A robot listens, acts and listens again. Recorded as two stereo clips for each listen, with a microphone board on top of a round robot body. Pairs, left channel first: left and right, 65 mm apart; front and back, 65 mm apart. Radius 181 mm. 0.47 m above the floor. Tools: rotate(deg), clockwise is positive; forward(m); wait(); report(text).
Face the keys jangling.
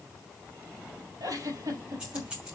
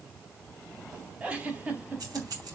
rotate(160)
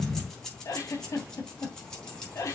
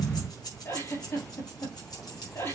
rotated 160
rotate(-15)
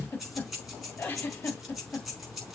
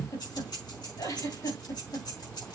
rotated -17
report("Found it: keys jangling, straight ahead, over 4 m away.")